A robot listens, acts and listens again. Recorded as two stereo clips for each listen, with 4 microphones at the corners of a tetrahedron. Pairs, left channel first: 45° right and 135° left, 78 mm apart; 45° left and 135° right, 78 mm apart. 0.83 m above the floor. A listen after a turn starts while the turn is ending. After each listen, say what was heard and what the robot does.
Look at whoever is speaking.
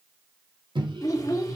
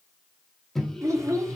The child speaking: 90° right. Turn 90° right.
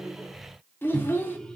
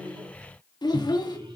The child speaking is now 15° left. Turn 15° left.
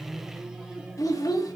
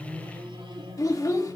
Facing the child speaking.